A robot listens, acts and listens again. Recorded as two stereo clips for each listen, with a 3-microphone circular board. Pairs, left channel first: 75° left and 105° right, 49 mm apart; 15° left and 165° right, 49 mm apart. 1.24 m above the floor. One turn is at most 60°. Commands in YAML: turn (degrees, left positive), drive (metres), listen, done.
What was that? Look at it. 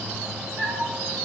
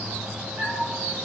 turn: -60
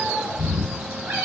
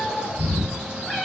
turn: -60
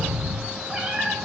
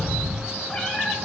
turn: -45
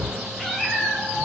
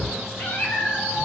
turn: -25
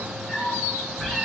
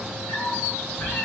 turn: -15
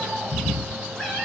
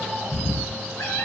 done: "Found it: a cat meowing, straight ahead."